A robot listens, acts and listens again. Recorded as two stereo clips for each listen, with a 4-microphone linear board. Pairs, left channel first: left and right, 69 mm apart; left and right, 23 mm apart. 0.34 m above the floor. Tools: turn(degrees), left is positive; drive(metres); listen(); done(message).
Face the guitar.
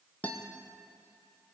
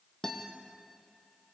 turn(degrees=25)
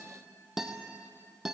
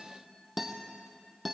done("Facing the guitar, 2 to 4 m away.")